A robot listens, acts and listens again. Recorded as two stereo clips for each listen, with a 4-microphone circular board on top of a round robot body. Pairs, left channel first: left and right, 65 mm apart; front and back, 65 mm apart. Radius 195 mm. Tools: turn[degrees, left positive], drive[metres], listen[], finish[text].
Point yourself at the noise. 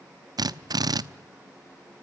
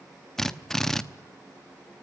Thought: The drill: 85° right.
Action: turn[-85]
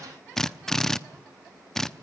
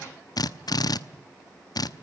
Thought: The drill is now 10° left.
Action: turn[10]
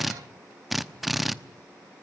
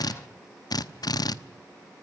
Action: finish[Facing the drill.]